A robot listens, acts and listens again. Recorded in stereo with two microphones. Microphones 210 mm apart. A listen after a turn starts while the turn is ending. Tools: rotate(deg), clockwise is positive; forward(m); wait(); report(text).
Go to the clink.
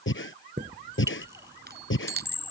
rotate(30)
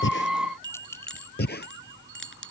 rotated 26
wait()
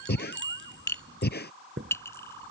rotate(-15)
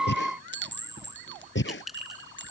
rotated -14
forward(1.0)
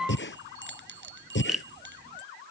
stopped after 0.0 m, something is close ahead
report("Blocked. The clink is further on, straight ahead.")